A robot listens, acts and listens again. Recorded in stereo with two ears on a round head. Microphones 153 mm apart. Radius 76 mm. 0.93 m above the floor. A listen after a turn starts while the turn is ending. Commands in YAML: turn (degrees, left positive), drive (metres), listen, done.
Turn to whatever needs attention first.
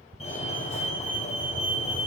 turn: 40
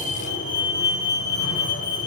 turn: 100
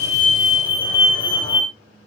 turn: 30
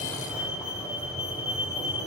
done: "Found it: a fire alarm, straight ahead."